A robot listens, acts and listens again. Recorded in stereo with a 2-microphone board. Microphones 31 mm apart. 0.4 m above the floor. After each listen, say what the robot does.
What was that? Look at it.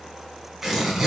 Turn 30° right.
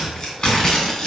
Turn 20° left.
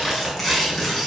Found it: tearing paper, straight ahead.